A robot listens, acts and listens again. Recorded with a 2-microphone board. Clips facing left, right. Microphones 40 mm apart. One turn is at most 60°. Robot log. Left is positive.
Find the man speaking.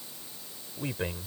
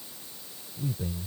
note: The man speaking: about 70° left or 110° left.
cmd yaw +60
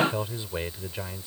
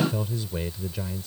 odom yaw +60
note: So it is at 15° left.
cmd yaw +15
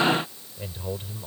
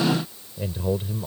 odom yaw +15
note: The man speaking is now 15° right.
cmd yaw -15
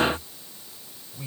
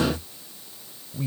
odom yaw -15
end: Facing the man speaking.